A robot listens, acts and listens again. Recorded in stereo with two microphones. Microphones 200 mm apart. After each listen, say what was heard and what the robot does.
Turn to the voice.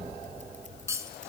Keep listening.
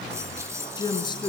The woman speaking: about 20° left or 160° left. Turn 20° left.
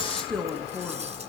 Facing the woman speaking.